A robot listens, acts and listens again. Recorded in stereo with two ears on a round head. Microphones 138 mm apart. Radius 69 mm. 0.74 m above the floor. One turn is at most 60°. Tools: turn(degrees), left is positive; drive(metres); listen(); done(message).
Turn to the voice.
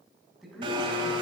turn(degrees=30)
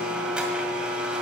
listen()
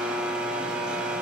listen()
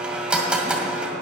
done("I heard a man speaking, but can't make it out now. It was about 30° right or 150° left.")